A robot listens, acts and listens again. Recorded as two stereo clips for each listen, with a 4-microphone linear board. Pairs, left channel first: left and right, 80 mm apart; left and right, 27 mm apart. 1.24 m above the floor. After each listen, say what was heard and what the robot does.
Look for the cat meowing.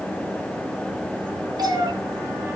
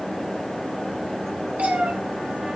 The cat meowing: about 65° right or 115° right. Turn 65° right.
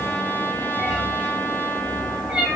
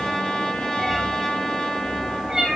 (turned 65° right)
So it is at 15° right. Turn 15° right.
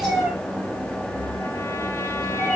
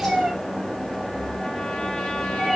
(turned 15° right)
Found it: a cat meowing, straight ahead, over 4 m away.